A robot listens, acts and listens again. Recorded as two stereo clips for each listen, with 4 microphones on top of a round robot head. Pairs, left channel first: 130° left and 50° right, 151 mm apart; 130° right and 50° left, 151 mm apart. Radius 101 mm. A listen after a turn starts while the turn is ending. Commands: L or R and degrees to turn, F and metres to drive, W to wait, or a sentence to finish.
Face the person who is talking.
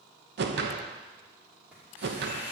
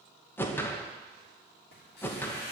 W
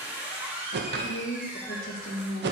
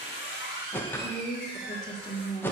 L160
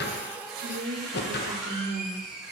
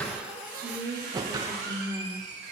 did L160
R25
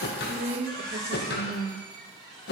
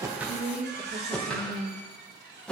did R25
Found it: a woman speaking, straight ahead.